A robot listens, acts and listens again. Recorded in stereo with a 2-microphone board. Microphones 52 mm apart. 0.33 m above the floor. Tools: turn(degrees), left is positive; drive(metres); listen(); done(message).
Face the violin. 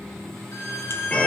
turn(degrees=60)
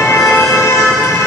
listen()
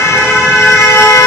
listen()
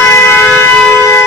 done("I heard a violin, but can't make it out now. It was about straight ahead or 60° left.")